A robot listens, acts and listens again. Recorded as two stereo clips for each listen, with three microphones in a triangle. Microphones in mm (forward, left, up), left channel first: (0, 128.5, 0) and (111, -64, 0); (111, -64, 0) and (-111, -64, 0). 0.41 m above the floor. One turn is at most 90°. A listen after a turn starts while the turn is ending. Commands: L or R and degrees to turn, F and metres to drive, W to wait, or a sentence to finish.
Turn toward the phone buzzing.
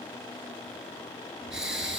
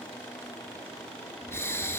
W
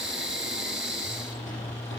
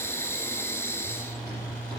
L40
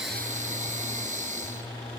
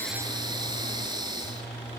Facing the phone buzzing, 2 to 4 m away.